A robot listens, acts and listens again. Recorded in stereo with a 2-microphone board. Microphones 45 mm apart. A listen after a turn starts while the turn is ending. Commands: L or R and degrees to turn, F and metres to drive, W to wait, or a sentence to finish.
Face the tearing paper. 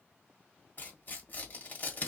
L40
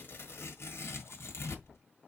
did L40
L100
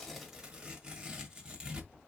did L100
R20
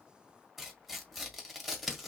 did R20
Facing the tearing paper.